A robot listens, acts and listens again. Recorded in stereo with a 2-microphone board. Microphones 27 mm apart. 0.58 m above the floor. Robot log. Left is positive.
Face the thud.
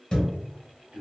note: The thud: about 30° left or 150° left.
cmd yaw +30
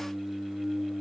cmd idle
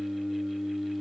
end: I heard a thud, but can't make it out now. It was about straight ahead or 120° left.